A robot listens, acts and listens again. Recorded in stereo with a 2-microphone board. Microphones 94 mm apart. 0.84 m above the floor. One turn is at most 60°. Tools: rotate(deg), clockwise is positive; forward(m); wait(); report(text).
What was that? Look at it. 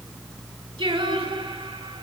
rotate(60)
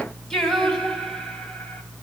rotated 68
rotate(-10)
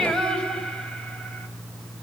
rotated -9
rotate(-10)
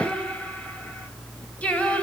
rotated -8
rotate(-15)
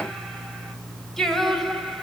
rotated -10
report("Found it: singing, straight ahead, 2 to 4 m away.")